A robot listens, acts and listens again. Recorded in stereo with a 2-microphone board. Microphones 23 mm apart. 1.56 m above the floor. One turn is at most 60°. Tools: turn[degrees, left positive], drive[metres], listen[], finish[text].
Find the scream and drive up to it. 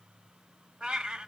Action: listen[]
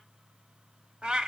Action: listen[]
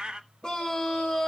Thought: The scream: about 40° left or 140° left.
Action: turn[40]
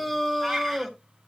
Action: drive[1.0]
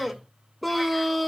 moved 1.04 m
Action: drive[1.0]
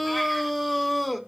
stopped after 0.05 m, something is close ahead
Action: finish[Arrived at the scream, straight ahead.]